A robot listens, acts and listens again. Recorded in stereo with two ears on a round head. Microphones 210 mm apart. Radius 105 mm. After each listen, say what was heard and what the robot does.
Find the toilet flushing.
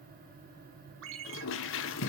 The toilet flushing: about 60° left or 120° left. Turn 60° left.
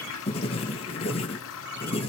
So it is at 60° left. Turn 60° left.
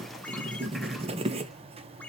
Keep listening.
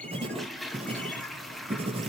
Facing the toilet flushing.